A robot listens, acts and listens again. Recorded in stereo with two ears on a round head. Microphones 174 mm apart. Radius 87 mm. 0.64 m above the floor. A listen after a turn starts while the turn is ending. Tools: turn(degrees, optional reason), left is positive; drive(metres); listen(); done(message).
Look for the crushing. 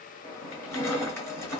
turn(degrees=30)
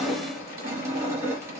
turn(degrees=-15, reason="So it is at 15° right.")
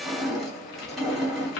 done("Facing the crushing, 1 to 2 m away.")